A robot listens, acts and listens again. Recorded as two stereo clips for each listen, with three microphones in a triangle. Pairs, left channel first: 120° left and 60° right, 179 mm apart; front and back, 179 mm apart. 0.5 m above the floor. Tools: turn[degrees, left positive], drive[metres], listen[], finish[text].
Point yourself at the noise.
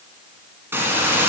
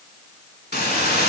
Thought: The hiss: 15° left.
Action: turn[15]
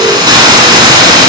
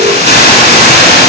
Action: finish[Found it: a hiss, straight ahead.]